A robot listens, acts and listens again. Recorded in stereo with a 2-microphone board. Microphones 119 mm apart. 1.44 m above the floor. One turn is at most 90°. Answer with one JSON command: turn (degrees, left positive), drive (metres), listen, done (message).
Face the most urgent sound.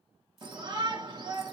{"turn": -40}
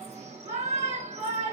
{"turn": -90}
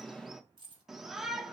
{"done": "Facing the shout."}